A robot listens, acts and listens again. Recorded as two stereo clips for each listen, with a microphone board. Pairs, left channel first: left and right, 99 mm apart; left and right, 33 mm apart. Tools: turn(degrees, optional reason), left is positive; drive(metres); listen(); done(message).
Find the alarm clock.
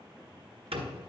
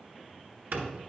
listen()
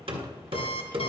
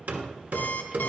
turn(degrees=75, reason="The alarm clock: about 75° left or 105° left.")
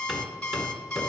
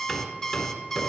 turn(degrees=10, reason="So it is at 10° left.")
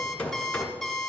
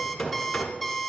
done("Facing the alarm clock.")